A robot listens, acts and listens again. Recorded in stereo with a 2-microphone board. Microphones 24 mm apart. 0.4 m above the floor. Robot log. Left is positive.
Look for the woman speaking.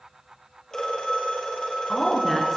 cmd yaw +30
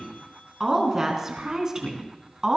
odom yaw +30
note: So it is at 25° right.
cmd yaw -25
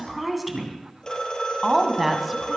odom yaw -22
note: The woman speaking is now 10° right.
cmd yaw -10
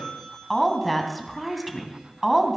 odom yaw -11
end: Found it: a woman speaking, straight ahead.